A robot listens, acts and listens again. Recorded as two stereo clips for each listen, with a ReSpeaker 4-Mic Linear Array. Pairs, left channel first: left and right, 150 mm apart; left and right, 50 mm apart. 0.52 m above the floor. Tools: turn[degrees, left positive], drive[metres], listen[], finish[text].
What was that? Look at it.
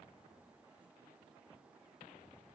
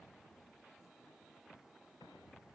Action: listen[]
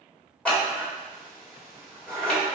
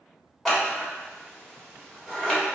Action: turn[30]
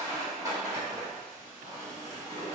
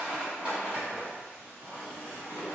Thought: So it is at 25° right.
Action: turn[-25]
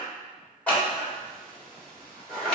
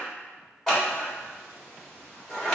Thought: The scissors is now 10° left.
Action: turn[10]
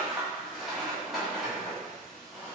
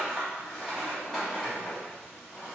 Action: finish[Facing the scissors, 1 to 2 m away.]